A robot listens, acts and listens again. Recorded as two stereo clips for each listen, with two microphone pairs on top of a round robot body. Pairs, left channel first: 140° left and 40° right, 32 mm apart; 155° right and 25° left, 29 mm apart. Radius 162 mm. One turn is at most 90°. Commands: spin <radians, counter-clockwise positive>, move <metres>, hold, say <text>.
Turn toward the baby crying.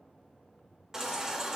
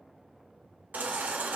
spin 0.52
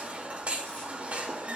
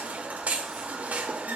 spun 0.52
say Facing the baby crying, under 1 m away.